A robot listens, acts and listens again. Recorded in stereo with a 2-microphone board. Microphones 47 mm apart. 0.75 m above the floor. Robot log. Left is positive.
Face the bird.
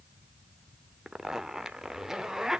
cmd idle
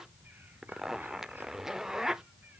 cmd idle
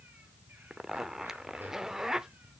end: I can't make out a bird to turn to.